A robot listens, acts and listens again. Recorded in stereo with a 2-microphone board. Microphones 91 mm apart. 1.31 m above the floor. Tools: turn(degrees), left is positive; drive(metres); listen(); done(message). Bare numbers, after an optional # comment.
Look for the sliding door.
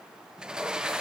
turn(-30)
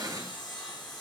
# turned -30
listen()
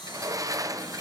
# So it is at 140° right.
turn(-140)
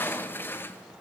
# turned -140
# The sliding door is now 25° left.
turn(25)
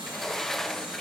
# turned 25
done("Facing the sliding door, under 1 m away.")